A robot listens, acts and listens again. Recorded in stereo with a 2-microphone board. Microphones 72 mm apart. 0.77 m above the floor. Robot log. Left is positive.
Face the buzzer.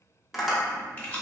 cmd idle
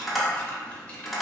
cmd idle
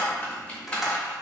end: I can't make out a buzzer to turn to.